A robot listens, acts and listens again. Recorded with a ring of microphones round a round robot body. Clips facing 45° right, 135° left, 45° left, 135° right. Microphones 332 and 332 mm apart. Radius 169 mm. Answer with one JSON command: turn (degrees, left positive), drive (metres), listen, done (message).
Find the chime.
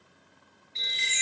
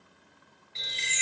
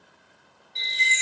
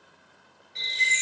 {"turn": 140}
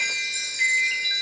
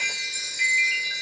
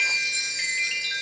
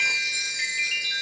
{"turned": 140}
{"turn": 50}
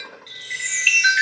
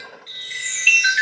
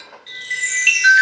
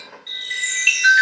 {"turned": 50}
{"done": "Facing the chime, 1 to 2 m away."}